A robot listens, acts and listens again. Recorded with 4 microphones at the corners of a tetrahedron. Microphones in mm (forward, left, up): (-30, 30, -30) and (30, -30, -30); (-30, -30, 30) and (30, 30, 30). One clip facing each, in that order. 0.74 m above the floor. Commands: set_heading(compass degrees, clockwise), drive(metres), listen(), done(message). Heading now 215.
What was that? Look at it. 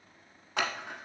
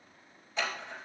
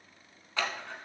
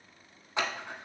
set_heading(100)
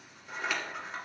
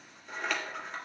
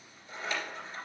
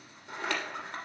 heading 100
set_heading(50)
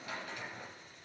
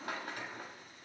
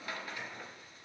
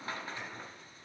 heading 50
set_heading(60)
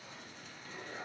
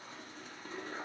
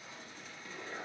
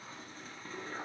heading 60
done("Facing the scissors, 1 to 2 m away.")